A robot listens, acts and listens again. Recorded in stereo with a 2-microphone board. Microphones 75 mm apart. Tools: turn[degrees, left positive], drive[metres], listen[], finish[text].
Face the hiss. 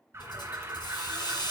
Action: turn[90]
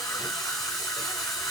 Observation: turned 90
Action: finish[Facing the hiss, over 4 m away.]